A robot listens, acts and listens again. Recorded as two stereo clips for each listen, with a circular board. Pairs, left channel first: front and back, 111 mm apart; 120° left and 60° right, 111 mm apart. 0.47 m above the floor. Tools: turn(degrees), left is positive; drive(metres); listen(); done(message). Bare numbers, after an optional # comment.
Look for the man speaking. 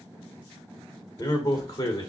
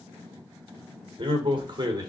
# The man speaking: 30° right.
turn(-30)
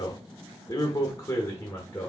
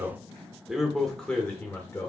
# The man speaking is now 60° left.
turn(60)
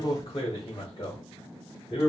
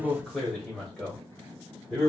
# The man speaking is now 35° left.
turn(35)
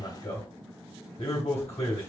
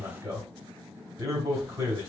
done("Facing the man speaking.")